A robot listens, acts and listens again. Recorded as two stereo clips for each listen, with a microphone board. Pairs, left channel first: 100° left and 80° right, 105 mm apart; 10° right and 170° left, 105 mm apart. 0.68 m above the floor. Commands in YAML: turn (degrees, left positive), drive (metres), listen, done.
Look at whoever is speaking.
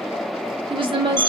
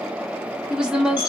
turn: -110
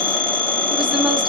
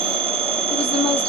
listen: true
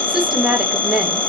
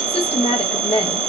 done: "Found it: a woman speaking, straight ahead, 1 to 2 m away."